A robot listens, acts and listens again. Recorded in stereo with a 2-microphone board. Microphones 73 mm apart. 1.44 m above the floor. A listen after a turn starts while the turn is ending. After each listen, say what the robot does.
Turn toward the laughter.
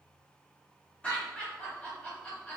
Turn 15° left.
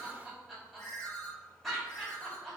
Facing the laughter, 1 to 2 m away.